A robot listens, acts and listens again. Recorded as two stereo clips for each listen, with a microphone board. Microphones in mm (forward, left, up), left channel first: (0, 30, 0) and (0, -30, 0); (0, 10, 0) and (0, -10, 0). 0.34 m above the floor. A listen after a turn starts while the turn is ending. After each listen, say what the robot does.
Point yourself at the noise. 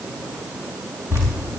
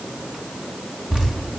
Turn 45° right.
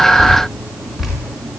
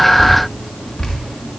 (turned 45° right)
Facing the dripping, over 4 m away.